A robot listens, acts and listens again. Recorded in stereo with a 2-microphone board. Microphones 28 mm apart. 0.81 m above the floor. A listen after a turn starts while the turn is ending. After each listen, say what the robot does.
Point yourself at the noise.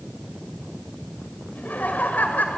Turn 90° left.
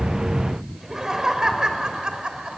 Turn 35° right.
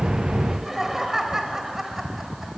Turn 15° right.
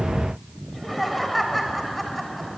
Facing the laughter.